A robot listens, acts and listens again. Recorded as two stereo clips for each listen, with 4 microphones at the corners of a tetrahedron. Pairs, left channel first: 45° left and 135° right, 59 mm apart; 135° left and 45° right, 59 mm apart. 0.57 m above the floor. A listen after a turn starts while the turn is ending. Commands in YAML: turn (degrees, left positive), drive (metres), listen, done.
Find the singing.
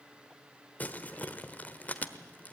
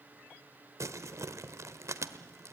listen: true
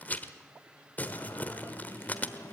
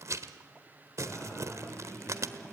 turn: 60
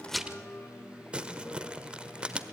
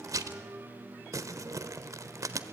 done: "Found it: singing, straight ahead."